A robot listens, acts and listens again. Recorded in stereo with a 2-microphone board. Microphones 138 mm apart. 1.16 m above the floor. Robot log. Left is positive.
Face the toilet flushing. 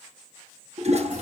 note: The toilet flushing: about 50° right or 130° right.
cmd yaw -50
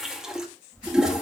end: Found it: a toilet flushing, straight ahead, 1 to 2 m away.